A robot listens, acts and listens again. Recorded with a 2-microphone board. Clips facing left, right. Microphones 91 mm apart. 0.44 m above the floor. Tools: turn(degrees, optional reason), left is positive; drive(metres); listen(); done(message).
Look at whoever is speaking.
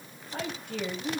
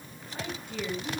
turn(degrees=60, reason="The woman speaking: about 60° left or 120° left.")
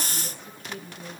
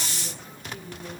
turn(degrees=50, reason="So it is at 50° left.")
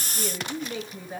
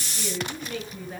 turn(degrees=15, reason="The woman speaking is now 15° left.")
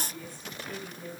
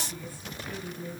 done("Facing the woman speaking.")